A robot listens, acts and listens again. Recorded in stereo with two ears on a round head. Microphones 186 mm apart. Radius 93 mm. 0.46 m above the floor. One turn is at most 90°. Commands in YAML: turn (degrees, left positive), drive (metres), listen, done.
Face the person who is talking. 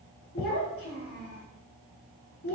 turn: 55
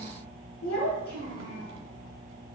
turn: 70
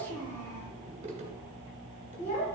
turn: 35
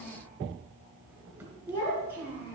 turn: 15
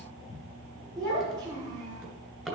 done: "Found it: a child speaking, straight ahead, over 4 m away."